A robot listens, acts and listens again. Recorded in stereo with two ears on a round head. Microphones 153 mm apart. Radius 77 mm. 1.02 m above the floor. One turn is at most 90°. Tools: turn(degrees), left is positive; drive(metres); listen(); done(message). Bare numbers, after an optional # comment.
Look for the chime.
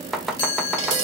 # The chime: about 75° left or 105° left.
turn(75)
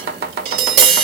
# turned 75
listen()
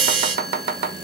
listen()
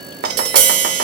done("I heard a chime, but can't make it out now. It was about straight ahead or 30° left.")